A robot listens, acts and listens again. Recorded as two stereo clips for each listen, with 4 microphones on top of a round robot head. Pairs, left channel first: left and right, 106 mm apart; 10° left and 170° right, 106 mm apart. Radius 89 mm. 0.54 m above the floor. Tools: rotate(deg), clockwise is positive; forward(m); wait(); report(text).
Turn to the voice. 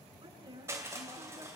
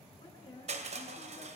rotate(45)
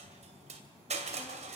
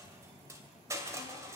wait()
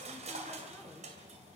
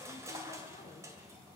wait()
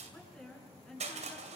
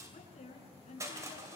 rotate(-10)
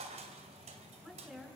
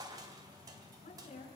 report("Facing the woman speaking.")